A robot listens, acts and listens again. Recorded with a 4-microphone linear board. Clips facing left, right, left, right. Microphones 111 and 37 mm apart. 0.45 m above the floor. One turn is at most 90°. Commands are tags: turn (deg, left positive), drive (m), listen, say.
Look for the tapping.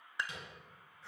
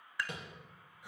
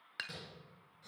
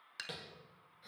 <turn deg="-50"/>
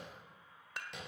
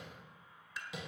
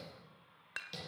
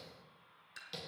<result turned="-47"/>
<say>Found it: tapping, straight ahead, over 4 m away.</say>